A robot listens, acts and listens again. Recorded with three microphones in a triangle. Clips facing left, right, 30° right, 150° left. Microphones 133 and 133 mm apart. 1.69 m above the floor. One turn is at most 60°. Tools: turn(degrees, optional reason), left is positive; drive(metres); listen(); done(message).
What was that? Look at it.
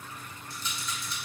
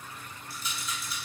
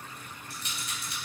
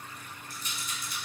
done("Found it: a rattle, straight ahead.")